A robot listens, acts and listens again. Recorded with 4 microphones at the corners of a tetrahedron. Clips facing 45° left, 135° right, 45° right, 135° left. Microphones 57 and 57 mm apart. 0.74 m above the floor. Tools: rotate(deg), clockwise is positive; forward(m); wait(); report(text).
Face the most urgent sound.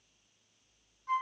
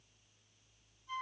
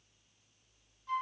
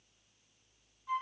wait()
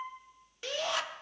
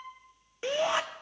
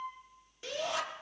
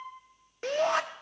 rotate(-160)
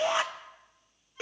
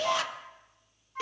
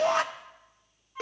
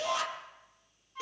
rotate(15)
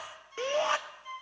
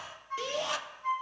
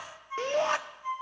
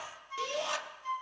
report("Facing the shout, 1 to 2 m away.")